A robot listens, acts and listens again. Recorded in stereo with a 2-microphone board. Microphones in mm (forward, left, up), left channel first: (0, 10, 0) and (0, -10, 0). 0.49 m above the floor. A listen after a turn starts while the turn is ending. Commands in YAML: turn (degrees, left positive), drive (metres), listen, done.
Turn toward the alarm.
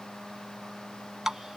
listen: true
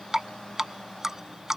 listen: true
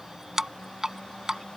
done: "I can't make out an alarm to turn to."